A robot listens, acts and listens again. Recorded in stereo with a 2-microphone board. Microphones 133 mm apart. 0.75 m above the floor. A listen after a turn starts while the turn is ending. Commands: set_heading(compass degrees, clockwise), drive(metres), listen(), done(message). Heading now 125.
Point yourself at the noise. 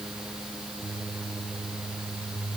listen()
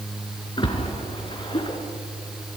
set_heading(85)
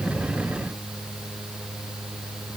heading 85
listen()
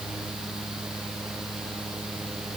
done("I heard a splash, but can't make it out now. It was about straight ahead or 100° left.")